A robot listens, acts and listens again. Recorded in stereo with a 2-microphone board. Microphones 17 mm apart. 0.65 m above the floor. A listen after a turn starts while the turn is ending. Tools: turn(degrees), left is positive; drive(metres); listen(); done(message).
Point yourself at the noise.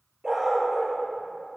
turn(degrees=-30)
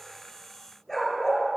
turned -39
turn(degrees=25)
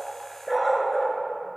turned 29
turn(degrees=10)
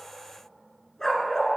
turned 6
turn(degrees=35)
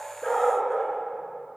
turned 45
done("Facing the dog barking, 1 to 2 m away.")